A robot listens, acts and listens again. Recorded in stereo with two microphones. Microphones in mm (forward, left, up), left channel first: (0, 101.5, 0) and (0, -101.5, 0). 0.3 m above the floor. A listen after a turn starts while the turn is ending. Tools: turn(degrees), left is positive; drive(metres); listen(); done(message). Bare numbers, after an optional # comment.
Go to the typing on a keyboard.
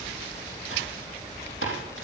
turn(90)
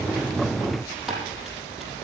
drive(1.0)
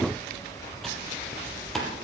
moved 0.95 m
drive(1.0)
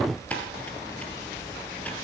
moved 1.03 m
drive(1.0)
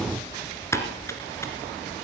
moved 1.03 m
# The typing on a keyboard is now 15° left.
turn(15)
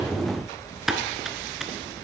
drive(1.0)
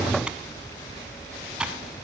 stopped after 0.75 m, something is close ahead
done("I am next to the typing on a keyboard.")